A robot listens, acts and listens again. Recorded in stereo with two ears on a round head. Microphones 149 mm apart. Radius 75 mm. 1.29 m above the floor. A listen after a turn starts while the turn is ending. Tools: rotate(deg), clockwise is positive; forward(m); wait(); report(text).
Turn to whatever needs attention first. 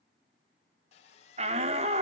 rotate(40)
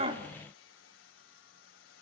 wait()
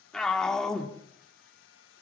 report("Facing the shout, 2 to 4 m away.")